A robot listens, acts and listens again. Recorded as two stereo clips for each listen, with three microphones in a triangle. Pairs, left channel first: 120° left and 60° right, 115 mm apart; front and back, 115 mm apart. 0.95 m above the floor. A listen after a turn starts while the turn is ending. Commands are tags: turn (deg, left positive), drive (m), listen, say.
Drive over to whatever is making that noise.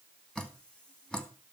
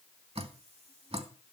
<turn deg="-160"/>
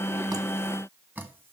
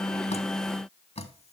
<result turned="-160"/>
<turn deg="15"/>
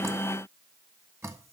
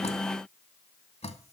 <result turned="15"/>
<drive m="1.0"/>
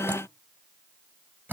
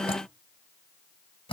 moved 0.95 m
<turn deg="10"/>
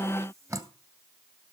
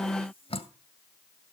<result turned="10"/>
<drive m="1.0"/>
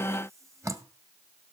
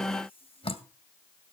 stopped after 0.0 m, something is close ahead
<say>I am next to the dripping.</say>